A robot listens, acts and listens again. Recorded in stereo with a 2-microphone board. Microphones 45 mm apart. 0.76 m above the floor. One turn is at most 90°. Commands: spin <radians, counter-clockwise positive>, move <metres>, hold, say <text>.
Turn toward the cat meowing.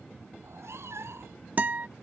spin -1.22
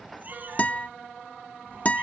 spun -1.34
spin -0.79
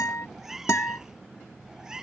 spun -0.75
spin -0.26
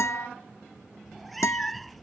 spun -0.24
say Found it: a cat meowing, straight ahead.